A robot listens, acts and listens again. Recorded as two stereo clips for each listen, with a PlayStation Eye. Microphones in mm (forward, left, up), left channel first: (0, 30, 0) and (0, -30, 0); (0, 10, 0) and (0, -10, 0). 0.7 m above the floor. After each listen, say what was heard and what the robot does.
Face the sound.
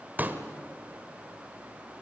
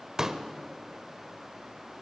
The pop: about 30° right or 150° right. Turn 30° right.
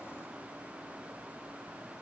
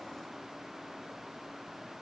Keep listening.
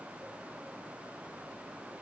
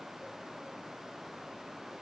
I heard a pop, but can't make it out now. It was about straight ahead or 120° right.